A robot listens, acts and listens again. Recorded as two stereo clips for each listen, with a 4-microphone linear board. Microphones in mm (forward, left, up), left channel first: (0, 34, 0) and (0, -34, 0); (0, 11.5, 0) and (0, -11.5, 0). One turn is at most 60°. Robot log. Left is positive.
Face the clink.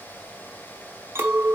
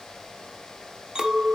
note: The clink: about 40° right or 140° right.
cmd yaw -40
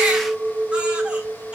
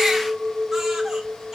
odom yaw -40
end: Found it: a clink, straight ahead, under 1 m away.